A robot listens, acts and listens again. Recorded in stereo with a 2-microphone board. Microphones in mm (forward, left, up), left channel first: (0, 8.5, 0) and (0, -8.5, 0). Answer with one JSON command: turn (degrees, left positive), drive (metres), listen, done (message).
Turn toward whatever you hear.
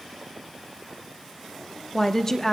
{"turn": 25}
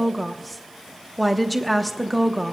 {"done": "Facing the woman speaking, under 1 m away."}